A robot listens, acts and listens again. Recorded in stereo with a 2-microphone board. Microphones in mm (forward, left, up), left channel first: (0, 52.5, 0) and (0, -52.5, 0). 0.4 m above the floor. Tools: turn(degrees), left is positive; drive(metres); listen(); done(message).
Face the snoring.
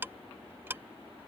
listen()
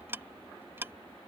listen()
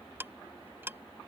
done("I can't make out snoring, only ticking.")